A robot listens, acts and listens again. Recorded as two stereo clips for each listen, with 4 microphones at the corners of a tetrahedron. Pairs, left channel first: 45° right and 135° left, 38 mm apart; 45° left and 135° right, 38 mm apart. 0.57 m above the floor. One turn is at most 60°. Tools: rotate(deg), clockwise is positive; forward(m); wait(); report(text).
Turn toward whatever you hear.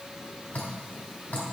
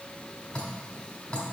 rotate(10)
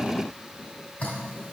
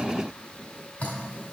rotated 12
report("Facing the dripping.")